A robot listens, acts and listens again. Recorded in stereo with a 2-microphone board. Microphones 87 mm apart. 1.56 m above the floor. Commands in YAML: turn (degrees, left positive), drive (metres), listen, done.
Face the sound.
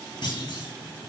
turn: 60
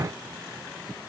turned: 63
listen: true
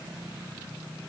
done: "I heard a clunk, but can't make it out now. It was about straight ahead or 55° left."